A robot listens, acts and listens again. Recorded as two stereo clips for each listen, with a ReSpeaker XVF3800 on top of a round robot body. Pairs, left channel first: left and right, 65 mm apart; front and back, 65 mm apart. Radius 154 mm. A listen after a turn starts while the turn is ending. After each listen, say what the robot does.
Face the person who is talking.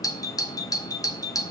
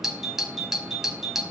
Keep listening.
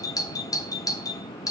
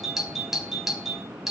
Keep listening.
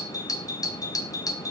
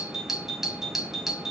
I can't make out anyone speaking to turn to.